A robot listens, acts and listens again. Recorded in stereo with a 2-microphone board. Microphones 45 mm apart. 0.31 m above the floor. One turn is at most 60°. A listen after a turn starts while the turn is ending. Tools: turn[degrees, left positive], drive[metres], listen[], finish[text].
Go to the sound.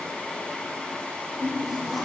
Action: turn[30]
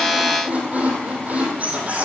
Thought: So it is at 30° right.
Action: turn[-30]
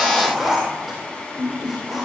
Action: drive[1.0]
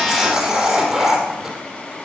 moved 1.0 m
Thought: The squeak is now 10° right.
Action: turn[-10]
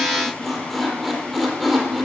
Action: drive[1.0]
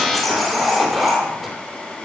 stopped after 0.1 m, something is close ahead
Action: finish[Blocked. The squeak is further on, straight ahead.]